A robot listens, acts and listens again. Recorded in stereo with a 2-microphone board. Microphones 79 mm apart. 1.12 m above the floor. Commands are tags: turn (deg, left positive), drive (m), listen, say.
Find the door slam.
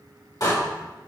<turn deg="55"/>
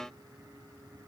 <listen/>
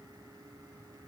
<say>I heard a door slam, but can't make it out now. It was about straight ahead or 70° left.</say>